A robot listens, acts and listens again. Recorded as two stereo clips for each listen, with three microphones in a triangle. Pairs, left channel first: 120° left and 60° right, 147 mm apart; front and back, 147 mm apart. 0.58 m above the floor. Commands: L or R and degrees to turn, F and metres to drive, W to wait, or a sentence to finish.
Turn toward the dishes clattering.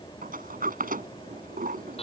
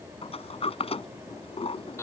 W
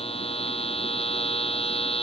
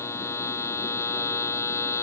W
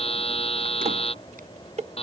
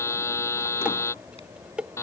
R95
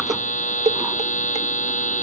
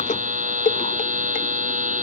R20
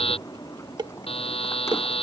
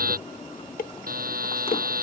Facing the dishes clattering.